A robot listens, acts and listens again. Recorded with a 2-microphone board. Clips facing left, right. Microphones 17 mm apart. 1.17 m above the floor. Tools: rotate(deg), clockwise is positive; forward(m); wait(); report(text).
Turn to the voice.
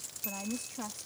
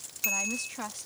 rotate(45)
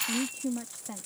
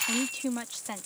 rotate(90)
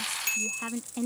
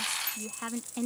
report("Found it: a woman speaking, straight ahead.")